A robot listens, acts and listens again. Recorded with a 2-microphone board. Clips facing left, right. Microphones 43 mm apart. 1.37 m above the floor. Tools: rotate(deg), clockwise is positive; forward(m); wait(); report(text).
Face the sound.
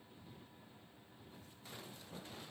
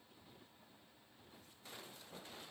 wait()
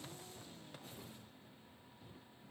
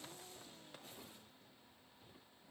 wait()
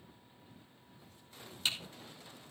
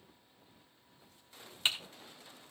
rotate(30)
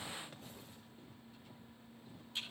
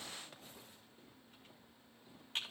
rotate(115)
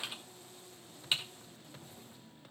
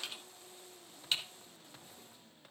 rotate(-15)
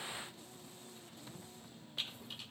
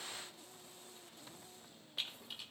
report("Found it: typing on a keyboard, straight ahead.")